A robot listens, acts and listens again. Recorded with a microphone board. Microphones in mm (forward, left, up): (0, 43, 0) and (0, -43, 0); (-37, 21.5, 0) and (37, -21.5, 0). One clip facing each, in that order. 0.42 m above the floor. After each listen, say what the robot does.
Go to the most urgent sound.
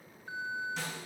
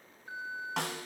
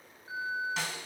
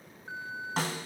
Turn 20° left.
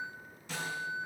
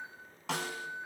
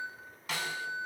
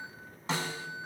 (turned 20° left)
Drive 1.0 m forward.
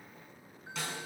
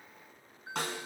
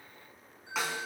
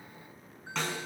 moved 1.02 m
Drive 1.0 m forward.
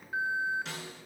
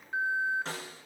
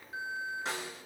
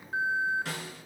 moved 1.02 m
Drive 1.0 m forward.
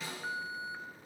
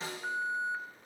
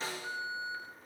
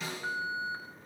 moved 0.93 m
Drive 1.0 m forward.
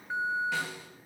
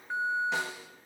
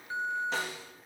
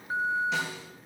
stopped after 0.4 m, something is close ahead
I am next to the alarm.